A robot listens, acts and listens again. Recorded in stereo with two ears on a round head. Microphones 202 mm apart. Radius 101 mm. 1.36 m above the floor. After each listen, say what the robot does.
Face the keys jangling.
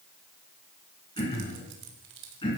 Turn 55° right.
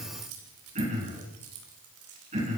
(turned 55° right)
Turn 70° right.
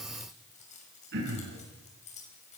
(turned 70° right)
Turn 30° left.
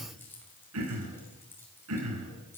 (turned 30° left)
Turn 10° left.
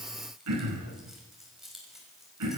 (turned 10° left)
Found it: keys jangling, straight ahead.